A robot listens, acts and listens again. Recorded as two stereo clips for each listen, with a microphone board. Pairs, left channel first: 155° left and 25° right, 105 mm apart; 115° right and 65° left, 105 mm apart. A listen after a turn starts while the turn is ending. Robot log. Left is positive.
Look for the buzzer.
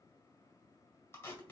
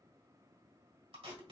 cmd idle
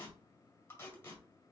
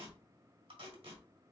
cmd idle
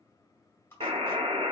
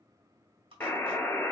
note: The buzzer: 45° right.
cmd yaw -45
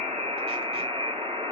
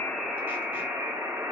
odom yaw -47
end: Found it: a buzzer, straight ahead.